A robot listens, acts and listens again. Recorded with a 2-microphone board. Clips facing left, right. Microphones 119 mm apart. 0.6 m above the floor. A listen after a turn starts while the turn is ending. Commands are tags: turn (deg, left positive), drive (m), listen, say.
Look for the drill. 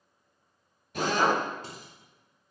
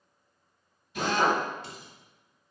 <turn deg="70"/>
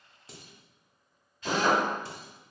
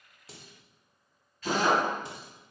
<turn deg="20"/>
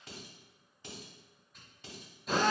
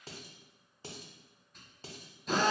<say>Found it: a drill, straight ahead, 1 to 2 m away.</say>